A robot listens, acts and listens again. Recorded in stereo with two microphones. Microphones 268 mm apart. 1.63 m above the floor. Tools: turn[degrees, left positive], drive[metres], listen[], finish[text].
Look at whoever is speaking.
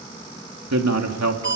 Action: turn[-90]
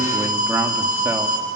Action: listen[]
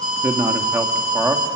Thought: The man speaking is now 10° right.
Action: turn[-10]
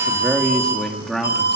Action: finish[Found it: a man speaking, straight ahead, 2 to 4 m away.]